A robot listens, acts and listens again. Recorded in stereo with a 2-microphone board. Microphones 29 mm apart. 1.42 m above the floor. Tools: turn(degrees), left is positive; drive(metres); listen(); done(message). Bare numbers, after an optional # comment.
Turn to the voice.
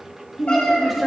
turn(30)
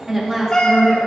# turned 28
# So it is at 10° right.
turn(-10)
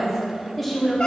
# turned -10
done("Found it: a woman speaking, straight ahead, 2 to 4 m away.")